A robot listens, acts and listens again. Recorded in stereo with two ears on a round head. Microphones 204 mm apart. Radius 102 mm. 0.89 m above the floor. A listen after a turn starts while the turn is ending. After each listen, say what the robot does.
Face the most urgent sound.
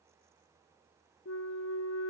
Keep listening.
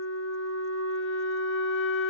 Keep listening.
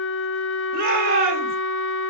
Turn 40° right.
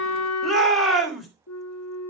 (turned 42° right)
Facing the shout.